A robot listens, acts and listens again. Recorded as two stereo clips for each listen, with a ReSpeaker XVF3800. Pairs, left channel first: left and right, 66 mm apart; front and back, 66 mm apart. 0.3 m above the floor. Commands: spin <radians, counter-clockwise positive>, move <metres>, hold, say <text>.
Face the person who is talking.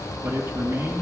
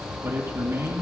spin -2.36
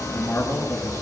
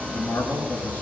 spin 0.70
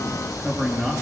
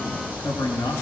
spin -0.17
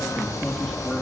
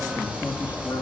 hold
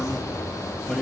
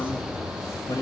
say Facing the man speaking.